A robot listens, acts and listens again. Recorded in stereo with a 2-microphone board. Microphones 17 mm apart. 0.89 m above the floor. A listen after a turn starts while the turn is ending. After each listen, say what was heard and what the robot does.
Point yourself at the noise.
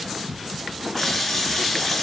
The running tap: about 20° left or 160° left. Turn 20° left.
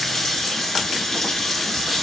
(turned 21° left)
So it is at 135° left. Turn 135° left.
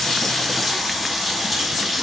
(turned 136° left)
Facing the running tap, 1 to 2 m away.